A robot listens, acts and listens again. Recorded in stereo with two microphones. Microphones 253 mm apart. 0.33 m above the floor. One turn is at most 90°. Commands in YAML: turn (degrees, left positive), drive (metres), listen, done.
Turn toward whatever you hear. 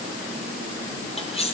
turn: 25
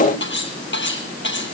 turn: 90
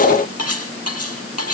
turn: 70
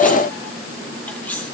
done: "Facing the cutlery clinking, over 4 m away."